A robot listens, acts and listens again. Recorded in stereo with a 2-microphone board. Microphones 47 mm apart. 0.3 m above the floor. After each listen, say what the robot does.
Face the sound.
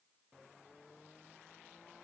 Keep listening.
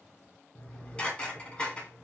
Turn 25° left.
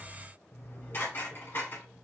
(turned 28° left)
Turn 125° left.
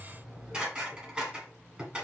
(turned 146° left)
Turn 20° right.
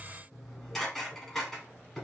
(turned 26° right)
Facing the dishes clattering.